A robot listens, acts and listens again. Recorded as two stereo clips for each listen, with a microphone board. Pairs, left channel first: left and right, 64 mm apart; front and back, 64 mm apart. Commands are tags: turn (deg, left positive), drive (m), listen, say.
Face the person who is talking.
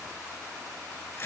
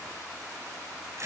<listen/>
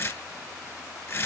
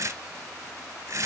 <listen/>
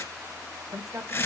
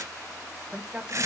<turn deg="-110"/>
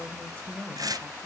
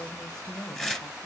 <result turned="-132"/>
<turn deg="25"/>
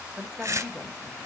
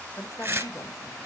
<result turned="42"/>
<turn deg="-20"/>
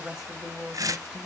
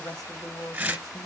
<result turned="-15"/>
<say>Found it: a woman speaking, straight ahead.</say>